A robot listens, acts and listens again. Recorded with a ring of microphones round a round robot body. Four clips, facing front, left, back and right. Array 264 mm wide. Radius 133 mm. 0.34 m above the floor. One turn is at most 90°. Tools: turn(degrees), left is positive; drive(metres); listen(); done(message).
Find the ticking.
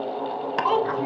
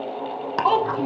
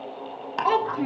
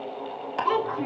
turn(degrees=70)
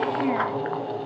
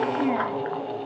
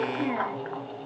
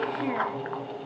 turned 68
listen()
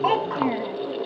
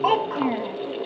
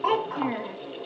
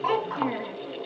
listen()
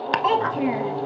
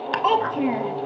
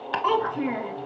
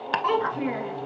done("Found it: ticking, straight ahead.")